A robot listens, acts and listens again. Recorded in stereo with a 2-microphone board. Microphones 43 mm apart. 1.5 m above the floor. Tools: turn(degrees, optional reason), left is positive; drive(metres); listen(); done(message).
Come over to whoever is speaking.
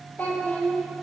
turn(degrees=45, reason="The child speaking: about 45° left or 135° left.")
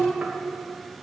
turn(degrees=85, reason="So it is at 85° left.")
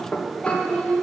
turn(degrees=20, reason="The child speaking is now 20° left.")
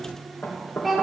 drive(metres=1.0)
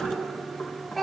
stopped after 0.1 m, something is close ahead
done("Something is in my way. I am facing the child speaking but have not reached it.")